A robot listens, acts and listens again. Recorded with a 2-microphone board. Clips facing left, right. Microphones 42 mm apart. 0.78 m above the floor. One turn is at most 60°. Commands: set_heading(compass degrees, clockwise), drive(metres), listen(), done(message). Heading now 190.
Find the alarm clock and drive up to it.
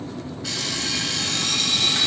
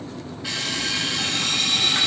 set_heading(210)
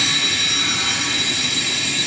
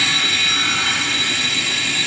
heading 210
set_heading(270)
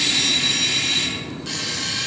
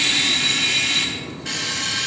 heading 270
set_heading(330)
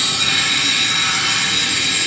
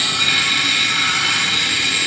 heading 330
set_heading(355)
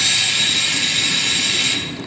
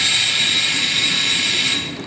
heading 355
set_heading(10)
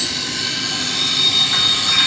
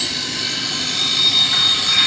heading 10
drive(1.0)
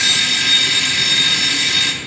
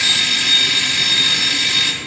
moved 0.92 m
drive(1.0)
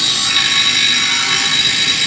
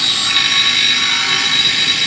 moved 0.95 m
drive(1.0)
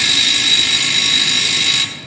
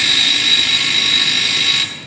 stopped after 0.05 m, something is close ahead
set_heading(20)
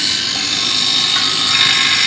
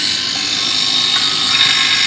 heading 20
done("I am next to the alarm clock.")